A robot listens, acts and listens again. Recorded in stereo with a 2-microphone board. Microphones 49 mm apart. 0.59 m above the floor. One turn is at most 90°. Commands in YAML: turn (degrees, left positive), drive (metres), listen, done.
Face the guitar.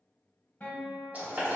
turn: 35
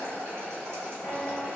listen: true
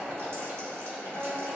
turn: 90
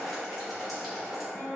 turn: 10
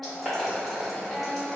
done: "Found it: a guitar, straight ahead, under 1 m away."